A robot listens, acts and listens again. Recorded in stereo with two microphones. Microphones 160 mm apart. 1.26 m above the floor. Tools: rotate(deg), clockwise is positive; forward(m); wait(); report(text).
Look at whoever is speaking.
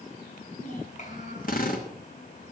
rotate(-50)
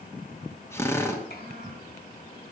rotate(-85)
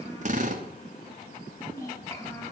rotate(-20)
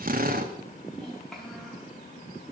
report("Facing the child speaking.")